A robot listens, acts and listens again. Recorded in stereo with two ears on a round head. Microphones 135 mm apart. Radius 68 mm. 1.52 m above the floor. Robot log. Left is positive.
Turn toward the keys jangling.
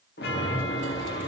cmd idle
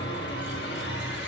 cmd idle
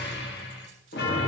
end: I can't make out keys jangling to turn to.